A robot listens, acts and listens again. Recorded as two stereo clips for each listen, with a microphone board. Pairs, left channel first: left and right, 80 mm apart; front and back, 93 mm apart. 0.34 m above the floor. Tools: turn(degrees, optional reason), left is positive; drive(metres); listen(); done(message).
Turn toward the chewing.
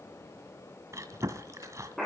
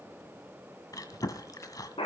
turn(degrees=-45, reason="The chewing: 45° right.")
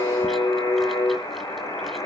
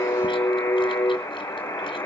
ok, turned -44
listen()
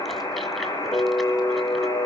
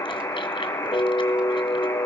listen()
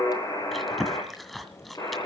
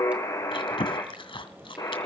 done("Found it: chewing, straight ahead, 2 to 4 m away.")